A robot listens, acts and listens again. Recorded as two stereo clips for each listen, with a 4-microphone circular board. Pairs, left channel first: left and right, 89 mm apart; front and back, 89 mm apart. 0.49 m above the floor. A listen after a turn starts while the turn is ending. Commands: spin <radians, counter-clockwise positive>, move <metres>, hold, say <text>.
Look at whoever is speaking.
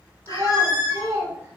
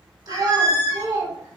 spin -2.53
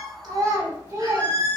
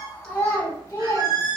spin -0.96
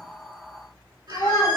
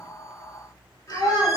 spin 0.52
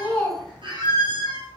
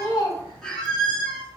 hold
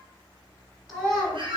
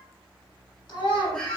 say Facing the child speaking, 1 to 2 m away.